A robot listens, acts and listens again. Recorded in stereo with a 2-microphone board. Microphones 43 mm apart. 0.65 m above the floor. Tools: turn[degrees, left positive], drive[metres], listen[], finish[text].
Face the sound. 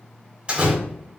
Thought: The door slam: about 30° right or 150° right.
Action: turn[-30]
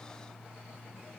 Action: listen[]
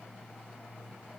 Action: finish[I heard a door slam, but can't make it out now. It was about straight ahead or 120° right.]